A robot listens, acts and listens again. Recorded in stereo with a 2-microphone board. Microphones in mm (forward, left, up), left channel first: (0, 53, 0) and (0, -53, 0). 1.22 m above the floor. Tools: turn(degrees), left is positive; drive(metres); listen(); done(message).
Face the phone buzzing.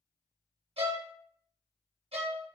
listen()
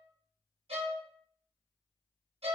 listen()
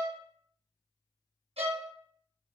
done("I can't make out a phone buzzing to turn to.")